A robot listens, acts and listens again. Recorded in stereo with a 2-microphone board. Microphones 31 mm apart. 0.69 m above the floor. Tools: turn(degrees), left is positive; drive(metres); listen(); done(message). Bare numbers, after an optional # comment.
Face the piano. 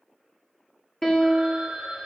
# The piano: about 15° left or 165° left.
turn(15)
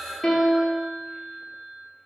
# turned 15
# So it is at 150° left.
turn(150)
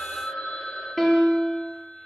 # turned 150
# The piano is now 10° left.
turn(10)
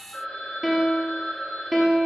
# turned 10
done("Facing the piano.")